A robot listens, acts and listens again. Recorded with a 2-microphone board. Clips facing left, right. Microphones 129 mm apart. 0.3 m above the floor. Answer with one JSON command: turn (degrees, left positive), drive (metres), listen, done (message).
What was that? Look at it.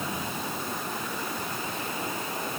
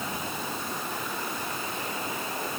{"listen": true}
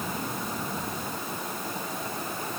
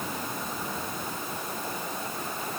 {"listen": true}
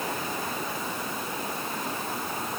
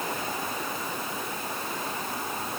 {"done": "I can't make out anything."}